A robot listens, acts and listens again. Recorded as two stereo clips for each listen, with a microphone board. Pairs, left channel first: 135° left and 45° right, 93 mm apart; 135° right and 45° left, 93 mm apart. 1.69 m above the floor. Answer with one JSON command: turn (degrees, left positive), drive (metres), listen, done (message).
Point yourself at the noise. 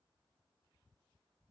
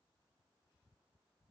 {"listen": true}
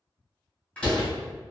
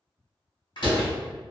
{"turn": -150}
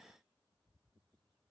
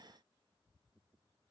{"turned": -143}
{"done": "Facing where the door slam came from. I can't hear it now."}